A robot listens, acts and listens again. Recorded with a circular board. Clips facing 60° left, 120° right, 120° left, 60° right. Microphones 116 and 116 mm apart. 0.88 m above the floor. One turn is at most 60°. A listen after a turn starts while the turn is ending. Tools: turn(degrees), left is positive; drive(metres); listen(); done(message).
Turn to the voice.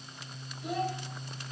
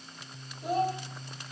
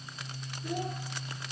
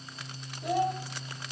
turn(degrees=-60)
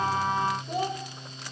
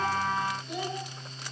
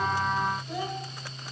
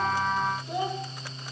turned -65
turn(degrees=10)
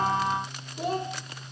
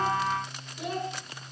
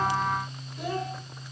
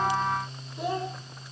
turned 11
done("Found it: a child speaking, straight ahead, 2 to 4 m away.")